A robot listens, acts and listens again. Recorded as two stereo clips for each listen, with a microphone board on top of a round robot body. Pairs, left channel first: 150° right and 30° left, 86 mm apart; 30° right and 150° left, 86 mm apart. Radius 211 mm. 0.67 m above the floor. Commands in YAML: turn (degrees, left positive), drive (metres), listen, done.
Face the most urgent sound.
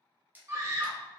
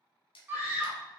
turn: 85
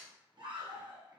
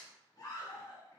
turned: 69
turn: 10
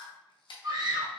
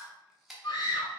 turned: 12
done: "Found it: a scream, straight ahead, 1 to 2 m away."